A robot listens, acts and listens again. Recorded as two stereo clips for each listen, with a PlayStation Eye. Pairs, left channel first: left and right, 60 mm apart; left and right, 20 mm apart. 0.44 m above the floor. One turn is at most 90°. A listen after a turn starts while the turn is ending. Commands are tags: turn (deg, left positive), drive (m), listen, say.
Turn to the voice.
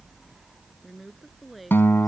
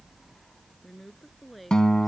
<turn deg="30"/>
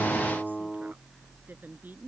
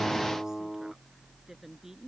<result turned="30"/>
<listen/>
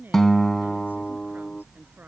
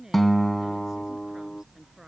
<listen/>
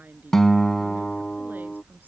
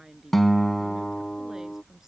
<say>I heard a woman speaking, but can't make it out now. It was about 30° right or 150° left.</say>